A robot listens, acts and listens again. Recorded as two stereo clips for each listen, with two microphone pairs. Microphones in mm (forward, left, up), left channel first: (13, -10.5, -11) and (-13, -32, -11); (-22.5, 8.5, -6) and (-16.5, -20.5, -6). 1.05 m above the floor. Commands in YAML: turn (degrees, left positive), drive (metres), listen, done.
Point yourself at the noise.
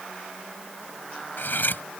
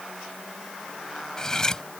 turn: 30
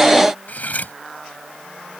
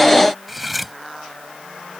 done: "Found it: cutlery clinking, straight ahead."